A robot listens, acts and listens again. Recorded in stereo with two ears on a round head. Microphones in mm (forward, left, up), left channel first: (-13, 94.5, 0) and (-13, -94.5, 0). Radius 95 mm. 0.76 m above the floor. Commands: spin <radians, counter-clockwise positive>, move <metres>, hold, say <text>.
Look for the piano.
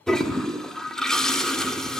hold
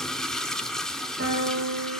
spin -0.87
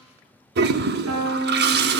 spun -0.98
spin -1.31
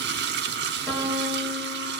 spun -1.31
say Found it: a piano, straight ahead, over 4 m away.